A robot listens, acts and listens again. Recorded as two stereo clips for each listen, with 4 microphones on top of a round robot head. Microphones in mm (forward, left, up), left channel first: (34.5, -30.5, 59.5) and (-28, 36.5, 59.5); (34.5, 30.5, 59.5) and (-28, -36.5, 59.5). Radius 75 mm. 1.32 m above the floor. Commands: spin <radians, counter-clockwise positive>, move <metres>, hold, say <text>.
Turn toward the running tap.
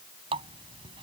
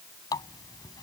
spin 1.75
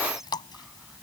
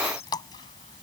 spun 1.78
say Facing the running tap.